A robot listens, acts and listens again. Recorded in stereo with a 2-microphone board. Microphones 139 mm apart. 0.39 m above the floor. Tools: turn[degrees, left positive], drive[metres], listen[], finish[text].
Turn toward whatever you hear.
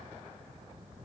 Action: listen[]
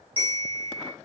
Thought: The bell: about 40° right or 140° right.
Action: turn[-40]
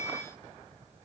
Thought: So it is at 95° right.
Action: turn[-95]
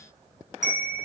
Action: finish[Facing the bell, 1 to 2 m away.]